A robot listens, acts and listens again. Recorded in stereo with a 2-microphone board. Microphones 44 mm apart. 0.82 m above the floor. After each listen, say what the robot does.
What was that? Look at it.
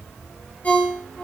Turn 30° left.
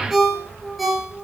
Facing the ringtone.